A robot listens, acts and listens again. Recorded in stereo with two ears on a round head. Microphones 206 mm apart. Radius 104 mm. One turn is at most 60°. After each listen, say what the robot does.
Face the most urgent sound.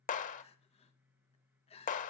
Turn 25° left.
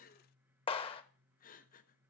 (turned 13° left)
Turn 60° left.
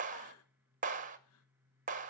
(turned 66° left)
Turn 60° left.
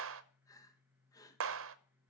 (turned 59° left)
Turn 15° left.
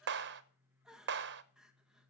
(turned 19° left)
Facing the crying.